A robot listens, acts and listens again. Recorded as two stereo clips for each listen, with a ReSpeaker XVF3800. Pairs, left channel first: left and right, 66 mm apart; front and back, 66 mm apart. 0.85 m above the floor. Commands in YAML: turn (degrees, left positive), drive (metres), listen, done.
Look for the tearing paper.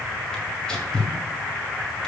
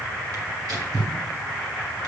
turn: 165
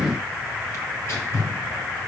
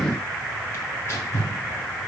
turn: 45
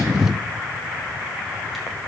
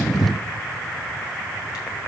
done: "Facing the tearing paper."